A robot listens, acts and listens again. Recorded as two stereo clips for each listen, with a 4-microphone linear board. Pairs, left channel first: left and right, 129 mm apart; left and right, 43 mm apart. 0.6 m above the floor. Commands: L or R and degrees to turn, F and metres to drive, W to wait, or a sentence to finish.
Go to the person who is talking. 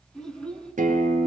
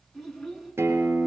L30
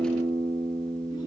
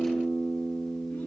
W
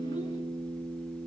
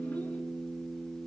W
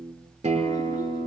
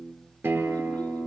I heard a child speaking, but can't make it out now. It was about 25° right or 145° left. I did not reach it.